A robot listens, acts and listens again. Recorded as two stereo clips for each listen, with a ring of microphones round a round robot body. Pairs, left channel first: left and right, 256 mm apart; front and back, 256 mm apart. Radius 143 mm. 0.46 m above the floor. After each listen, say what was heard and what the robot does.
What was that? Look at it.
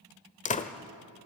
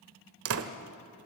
The door slam: 150° left. Turn 150° left.
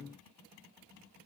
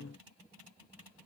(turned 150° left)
I heard a door slam from this way, but can't make it out now.